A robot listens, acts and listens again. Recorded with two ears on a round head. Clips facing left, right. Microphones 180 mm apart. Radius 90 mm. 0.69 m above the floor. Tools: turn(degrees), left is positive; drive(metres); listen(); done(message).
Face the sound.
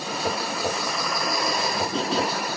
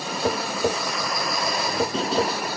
turn(degrees=-65)
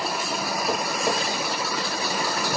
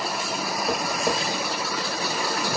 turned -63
listen()
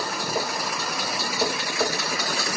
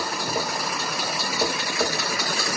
done("Found it: tapping, straight ahead.")